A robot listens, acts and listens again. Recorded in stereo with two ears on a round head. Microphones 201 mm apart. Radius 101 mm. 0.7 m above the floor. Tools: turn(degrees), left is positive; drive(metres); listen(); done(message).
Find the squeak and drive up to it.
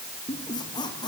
turn(degrees=20)
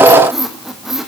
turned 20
drive(metres=1.0)
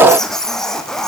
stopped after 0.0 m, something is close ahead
done("Something is in my way. I am facing the squeak but have not reached it.")